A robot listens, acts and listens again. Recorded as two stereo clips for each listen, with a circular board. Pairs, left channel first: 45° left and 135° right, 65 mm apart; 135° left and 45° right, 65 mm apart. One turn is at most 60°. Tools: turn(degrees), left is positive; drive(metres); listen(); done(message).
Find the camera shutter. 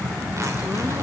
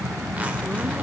listen()
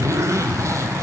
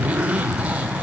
listen()
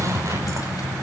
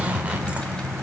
done("I can't make out a camera shutter, only a zipper.")